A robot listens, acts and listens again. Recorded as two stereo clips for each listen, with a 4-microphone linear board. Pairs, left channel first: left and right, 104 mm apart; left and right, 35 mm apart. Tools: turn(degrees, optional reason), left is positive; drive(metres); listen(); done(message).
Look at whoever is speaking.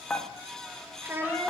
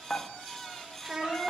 turn(degrees=-20, reason="The child speaking: about 20° right or 160° right.")
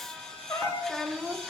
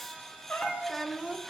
done("Found it: a child speaking, straight ahead, 1 to 2 m away.")